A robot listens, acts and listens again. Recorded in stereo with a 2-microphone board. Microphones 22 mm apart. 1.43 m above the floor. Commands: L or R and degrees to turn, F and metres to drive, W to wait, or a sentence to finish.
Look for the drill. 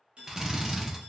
R20
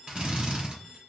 R135
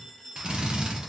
R45
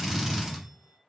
R10
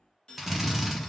Facing the drill.